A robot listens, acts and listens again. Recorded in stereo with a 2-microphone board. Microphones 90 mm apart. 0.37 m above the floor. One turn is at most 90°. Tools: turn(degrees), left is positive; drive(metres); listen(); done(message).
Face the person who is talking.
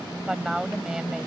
turn(degrees=-30)
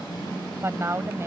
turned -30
turn(degrees=-90)
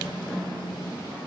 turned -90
turn(degrees=-55)
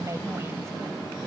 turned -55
turn(degrees=-40)
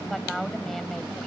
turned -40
done("Facing the woman speaking.")